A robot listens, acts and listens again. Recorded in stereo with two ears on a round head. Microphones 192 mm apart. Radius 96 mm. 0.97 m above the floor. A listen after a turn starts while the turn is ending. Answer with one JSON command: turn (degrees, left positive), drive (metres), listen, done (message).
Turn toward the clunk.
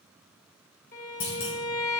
{"turn": 60}
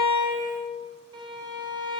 {"listen": true}
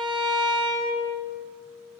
{"done": "I heard a clunk, but can't make it out now. It was about straight ahead or 60° left."}